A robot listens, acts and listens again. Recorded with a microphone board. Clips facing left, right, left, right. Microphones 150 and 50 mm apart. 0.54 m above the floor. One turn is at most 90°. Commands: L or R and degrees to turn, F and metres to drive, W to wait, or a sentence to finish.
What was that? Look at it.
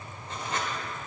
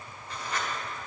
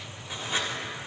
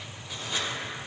L25
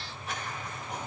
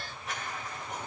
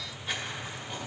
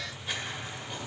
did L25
Found it: writing, straight ahead.